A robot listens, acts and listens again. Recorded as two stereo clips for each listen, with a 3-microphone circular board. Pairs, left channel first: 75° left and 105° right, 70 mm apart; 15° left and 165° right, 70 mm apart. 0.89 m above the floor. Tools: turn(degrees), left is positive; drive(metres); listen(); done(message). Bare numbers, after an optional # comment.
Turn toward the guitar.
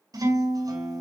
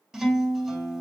# The guitar: 80° right.
turn(-80)
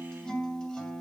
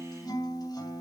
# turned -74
done("Found it: a guitar, straight ahead, 2 to 4 m away.")